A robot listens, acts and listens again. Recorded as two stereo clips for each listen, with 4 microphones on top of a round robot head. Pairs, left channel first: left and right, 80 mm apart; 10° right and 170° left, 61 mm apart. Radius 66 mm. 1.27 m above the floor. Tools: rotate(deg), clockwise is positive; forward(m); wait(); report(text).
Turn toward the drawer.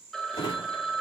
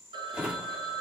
rotate(-95)
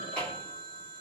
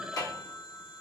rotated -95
rotate(-10)
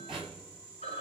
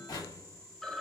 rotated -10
report("Found it: a drawer, straight ahead, 1 to 2 m away.")